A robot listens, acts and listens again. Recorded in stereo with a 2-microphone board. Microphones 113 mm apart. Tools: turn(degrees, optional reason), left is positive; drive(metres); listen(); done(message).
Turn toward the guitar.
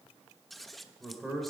listen()
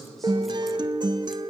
turn(degrees=-40, reason="The guitar: about 40° right or 140° right.")
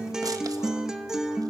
done("Facing the guitar, under 1 m away.")